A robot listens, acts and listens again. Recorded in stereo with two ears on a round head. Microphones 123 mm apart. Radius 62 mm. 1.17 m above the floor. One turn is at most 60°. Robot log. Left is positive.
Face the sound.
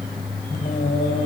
note: The singing: about 60° left or 120° left.
cmd yaw +60
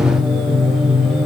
end: Found it: singing, straight ahead, over 4 m away.